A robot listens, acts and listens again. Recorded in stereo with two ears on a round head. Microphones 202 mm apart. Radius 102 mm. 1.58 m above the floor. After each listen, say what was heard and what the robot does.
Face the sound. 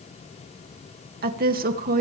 The woman speaking: about 40° right or 140° right. Turn 40° right.
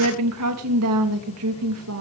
So it is at 105° right. Turn 105° right.
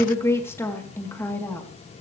The woman speaking is now 10° left. Turn 10° left.
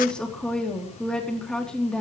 Found it: a woman speaking, straight ahead, 2 to 4 m away.